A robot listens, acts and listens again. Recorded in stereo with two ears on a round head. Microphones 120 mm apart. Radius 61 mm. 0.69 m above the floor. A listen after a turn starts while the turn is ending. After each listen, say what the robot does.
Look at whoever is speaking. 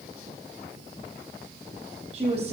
Turn 50° right.
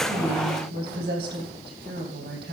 Turn 80° right.
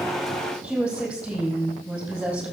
Facing the woman speaking, over 4 m away.